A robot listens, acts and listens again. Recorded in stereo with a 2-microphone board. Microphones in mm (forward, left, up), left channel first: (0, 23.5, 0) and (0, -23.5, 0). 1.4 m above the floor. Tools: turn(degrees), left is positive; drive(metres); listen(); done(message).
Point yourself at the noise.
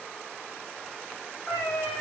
turn(degrees=40)
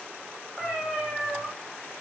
turn(degrees=-15)
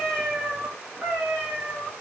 turn(degrees=-40)
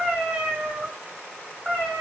turn(degrees=-20)
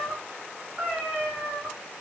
done("Found it: a cat meowing, straight ahead.")